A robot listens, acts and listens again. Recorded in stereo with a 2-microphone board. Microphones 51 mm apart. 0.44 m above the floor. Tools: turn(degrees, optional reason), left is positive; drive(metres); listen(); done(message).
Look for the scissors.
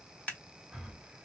turn(degrees=25, reason="The scissors: about 25° left or 155° left.")
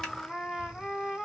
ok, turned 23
listen()
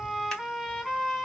listen()
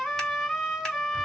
done("I heard scissors, but can't make it out now. It was about 5° left or 130° left.")